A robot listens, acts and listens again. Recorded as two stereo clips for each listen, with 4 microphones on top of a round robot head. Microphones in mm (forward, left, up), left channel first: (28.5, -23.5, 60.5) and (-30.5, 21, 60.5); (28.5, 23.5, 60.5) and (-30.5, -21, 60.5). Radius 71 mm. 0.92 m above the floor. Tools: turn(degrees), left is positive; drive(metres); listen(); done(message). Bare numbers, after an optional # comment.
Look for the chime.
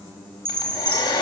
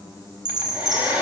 # The chime: 160° right.
turn(-160)
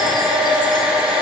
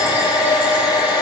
listen()
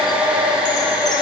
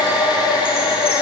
listen()
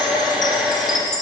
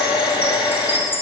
# The chime is now 20° right.
turn(-20)
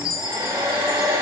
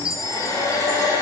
done("Found it: a chime, straight ahead.")